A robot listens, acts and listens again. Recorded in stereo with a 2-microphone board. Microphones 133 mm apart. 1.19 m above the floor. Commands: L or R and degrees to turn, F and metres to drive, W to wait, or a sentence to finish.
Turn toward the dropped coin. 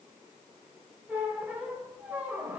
W
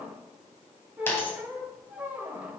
L15
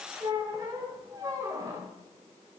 W
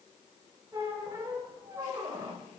I heard a dropped coin, but can't make it out now. It was about straight ahead or 150° left.